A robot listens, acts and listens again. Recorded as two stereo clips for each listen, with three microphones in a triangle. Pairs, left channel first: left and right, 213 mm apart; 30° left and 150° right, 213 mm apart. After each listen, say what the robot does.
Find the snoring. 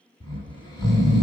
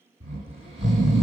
Turn 155° left.
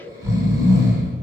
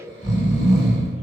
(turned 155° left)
Turn 20° right.
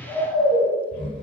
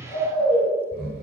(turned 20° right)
Found it: snoring, straight ahead.